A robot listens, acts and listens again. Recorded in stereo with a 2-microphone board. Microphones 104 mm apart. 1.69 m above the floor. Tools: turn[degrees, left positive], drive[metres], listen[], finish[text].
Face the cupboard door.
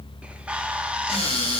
Action: turn[90]
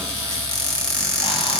Action: finish[Found it: a cupboard door, straight ahead.]